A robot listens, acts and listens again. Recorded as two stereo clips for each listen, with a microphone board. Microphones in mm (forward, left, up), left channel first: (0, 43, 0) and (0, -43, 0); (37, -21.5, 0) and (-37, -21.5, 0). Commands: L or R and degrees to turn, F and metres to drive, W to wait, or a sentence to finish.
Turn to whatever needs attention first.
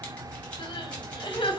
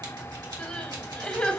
L75
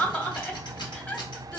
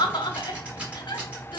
L20
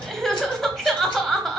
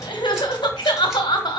Facing the crying, 1 to 2 m away.